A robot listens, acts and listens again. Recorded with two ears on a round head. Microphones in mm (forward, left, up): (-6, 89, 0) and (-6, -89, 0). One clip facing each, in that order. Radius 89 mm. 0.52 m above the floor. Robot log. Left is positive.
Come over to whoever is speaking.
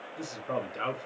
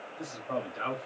note: The man speaking: about 55° left or 125° left.
cmd yaw +55
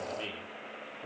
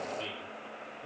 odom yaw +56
note: So it is at 35° left.
cmd yaw +35
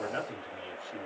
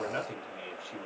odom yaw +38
cmd fwd 1.0
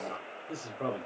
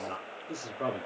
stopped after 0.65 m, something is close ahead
note: The man speaking is now 10° right.
cmd yaw -10
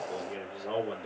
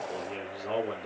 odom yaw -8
end: I am next to the man speaking.